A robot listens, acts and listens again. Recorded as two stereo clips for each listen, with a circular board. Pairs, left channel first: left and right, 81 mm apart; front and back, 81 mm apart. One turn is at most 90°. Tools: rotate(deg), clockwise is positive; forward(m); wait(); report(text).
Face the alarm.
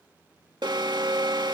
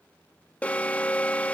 rotate(70)
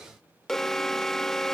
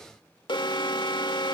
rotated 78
report("Found it: an alarm, straight ahead.")